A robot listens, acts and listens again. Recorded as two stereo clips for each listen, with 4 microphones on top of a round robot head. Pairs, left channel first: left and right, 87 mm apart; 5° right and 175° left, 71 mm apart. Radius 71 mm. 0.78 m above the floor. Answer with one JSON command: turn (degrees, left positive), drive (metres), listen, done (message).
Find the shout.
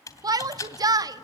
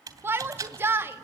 {"turn": -125}
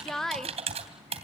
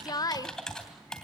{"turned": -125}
{"done": "Found it: a shout, straight ahead."}